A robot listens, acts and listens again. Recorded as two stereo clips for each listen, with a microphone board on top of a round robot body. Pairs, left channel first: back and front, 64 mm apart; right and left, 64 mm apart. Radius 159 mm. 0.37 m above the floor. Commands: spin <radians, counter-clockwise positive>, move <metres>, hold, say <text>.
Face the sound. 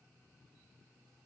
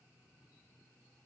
hold
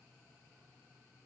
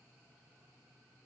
hold
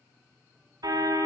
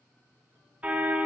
spin 0.35
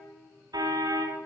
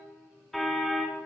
say Facing the car horn, 2 to 4 m away.